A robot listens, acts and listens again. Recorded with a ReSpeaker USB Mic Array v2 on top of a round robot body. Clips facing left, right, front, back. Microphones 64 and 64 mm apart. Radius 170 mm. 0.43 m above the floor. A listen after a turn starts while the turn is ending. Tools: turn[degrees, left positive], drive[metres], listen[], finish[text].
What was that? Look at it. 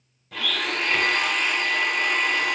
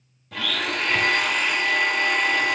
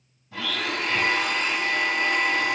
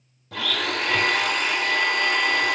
Thought: The blender: straight behind.
Action: turn[180]
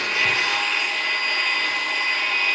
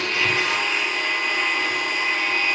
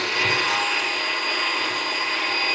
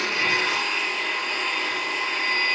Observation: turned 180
Thought: The blender is now 10° right.
Action: turn[-10]
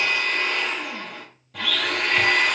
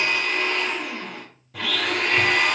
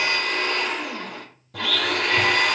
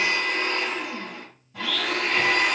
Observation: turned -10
Action: finish[Facing the blender, 1 to 2 m away.]